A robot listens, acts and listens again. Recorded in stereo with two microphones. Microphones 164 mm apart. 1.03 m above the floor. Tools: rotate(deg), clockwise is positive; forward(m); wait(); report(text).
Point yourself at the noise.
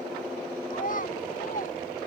rotate(-55)
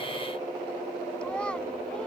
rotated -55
report("Facing the child speaking.")